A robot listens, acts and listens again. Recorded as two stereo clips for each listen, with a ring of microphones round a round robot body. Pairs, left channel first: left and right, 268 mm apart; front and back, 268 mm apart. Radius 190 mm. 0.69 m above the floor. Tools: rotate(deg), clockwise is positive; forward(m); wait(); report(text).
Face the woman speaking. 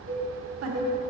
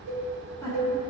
rotate(80)
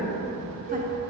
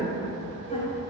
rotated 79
wait()
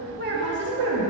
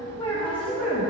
rotate(95)
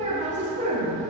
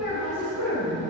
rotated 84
rotate(35)
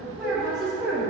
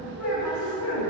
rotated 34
report("Facing the woman speaking, 2 to 4 m away.")